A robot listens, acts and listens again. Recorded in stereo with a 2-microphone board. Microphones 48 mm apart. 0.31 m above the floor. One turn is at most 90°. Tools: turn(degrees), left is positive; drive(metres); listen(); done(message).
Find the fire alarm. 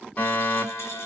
turn(degrees=30)
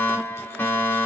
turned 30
turn(degrees=90)
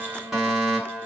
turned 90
done("Found it: a fire alarm, straight ahead, over 4 m away.")